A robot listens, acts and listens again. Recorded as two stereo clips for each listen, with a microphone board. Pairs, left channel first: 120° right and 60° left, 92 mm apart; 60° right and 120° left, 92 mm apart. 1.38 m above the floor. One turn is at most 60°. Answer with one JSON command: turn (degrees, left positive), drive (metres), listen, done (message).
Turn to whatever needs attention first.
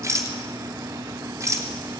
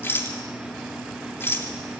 {"listen": true}
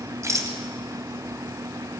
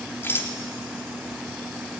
{"listen": true}
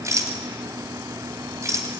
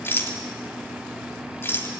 {"done": "I can't make out anything urgent to turn to."}